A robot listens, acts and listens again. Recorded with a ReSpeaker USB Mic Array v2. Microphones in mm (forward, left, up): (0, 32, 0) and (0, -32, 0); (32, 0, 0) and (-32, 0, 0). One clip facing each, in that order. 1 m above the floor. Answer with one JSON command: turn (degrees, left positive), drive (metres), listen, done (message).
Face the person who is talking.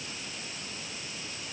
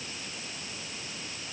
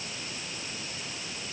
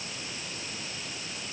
{"listen": true}
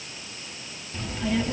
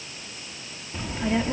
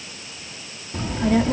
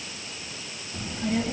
{"turn": -25}
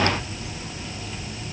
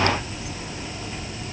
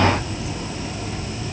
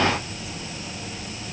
{"turn": -30}
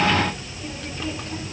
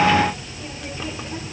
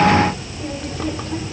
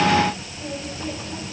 {"turn": -10}
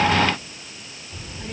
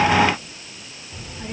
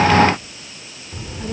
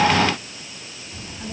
{"done": "Facing the child speaking."}